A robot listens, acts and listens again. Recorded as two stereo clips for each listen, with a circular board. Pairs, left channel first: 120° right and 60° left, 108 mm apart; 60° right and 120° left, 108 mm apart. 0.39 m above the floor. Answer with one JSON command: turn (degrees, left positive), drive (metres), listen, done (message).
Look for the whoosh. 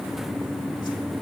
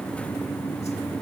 {"listen": true}
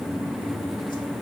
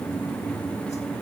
{"listen": true}
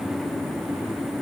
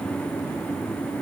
{"done": "I can't make out a whoosh to turn to."}